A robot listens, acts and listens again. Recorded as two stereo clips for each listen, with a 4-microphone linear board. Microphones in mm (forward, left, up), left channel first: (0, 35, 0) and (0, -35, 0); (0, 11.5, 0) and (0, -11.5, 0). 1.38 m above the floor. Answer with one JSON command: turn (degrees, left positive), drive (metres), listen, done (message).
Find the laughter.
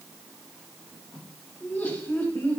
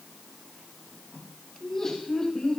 {"turn": 30}
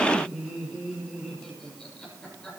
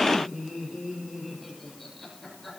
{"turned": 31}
{"turn": 10}
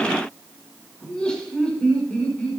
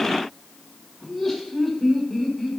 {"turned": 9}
{"turn": 15}
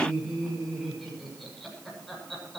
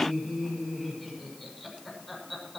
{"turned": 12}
{"done": "Found it: laughter, straight ahead, over 4 m away."}